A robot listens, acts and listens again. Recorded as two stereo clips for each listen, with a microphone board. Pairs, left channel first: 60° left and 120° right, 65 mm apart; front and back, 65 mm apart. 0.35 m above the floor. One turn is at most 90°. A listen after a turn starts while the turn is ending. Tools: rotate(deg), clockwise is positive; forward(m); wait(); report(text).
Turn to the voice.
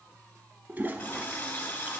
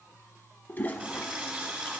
wait()
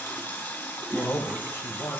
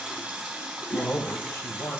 rotate(-30)
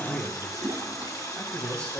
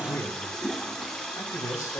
report("Found it: a man speaking, straight ahead, 1 to 2 m away.")